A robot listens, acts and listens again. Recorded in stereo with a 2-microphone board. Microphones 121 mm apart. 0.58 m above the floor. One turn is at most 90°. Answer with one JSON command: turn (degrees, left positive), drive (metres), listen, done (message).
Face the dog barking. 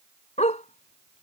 {"turn": 75}
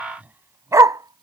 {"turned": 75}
{"turn": -30}
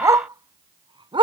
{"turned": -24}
{"turn": -45}
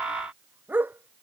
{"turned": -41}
{"turn": -15}
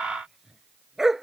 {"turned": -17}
{"done": "Facing the dog barking."}